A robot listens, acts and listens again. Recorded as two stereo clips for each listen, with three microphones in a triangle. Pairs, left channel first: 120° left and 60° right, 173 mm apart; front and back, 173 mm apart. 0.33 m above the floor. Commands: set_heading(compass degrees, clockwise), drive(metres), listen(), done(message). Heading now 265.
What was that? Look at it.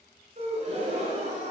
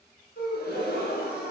set_heading(280)
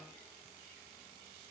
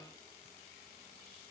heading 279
done("Facing where the gasp came from. I can't hear it now.")